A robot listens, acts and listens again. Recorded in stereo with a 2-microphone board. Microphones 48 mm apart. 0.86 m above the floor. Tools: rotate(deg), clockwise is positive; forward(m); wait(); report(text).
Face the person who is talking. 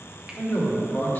rotate(-45)
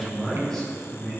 rotate(-15)
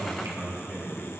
rotate(-15)
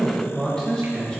rotate(-20)
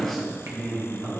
rotate(-15)
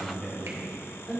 report("Found it: a man speaking, straight ahead.")